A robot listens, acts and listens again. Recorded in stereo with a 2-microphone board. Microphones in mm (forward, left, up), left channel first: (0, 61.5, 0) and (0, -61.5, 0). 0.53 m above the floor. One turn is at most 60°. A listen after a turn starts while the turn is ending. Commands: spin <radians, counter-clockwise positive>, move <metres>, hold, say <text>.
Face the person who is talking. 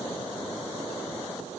hold
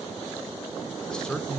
spin 0.52
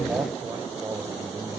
spin -0.44
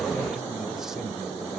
hold
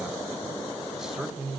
say Facing the man speaking.